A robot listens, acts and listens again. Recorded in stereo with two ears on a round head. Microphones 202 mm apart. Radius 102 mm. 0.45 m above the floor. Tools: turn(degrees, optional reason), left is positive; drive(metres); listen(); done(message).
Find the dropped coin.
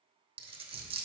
turn(degrees=-25, reason="The dropped coin: about 25° right or 155° right.")
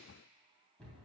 listen()
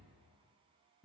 done("I heard a dropped coin, but can't make it out now. It was about straight ahead or 130° right.")